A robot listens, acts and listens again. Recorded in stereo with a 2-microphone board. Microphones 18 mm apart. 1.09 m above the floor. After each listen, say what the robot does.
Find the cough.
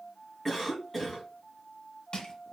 Turn 30° left.
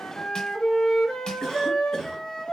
Turn 145° left.
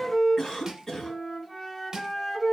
Turn 40° left.
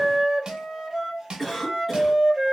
Found it: a cough, straight ahead.